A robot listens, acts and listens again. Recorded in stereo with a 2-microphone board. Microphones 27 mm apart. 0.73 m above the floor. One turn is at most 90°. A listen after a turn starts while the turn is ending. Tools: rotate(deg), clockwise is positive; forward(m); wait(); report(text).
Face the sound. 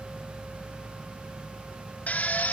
rotate(-90)
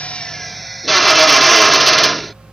report("Found it: a drill, straight ahead.")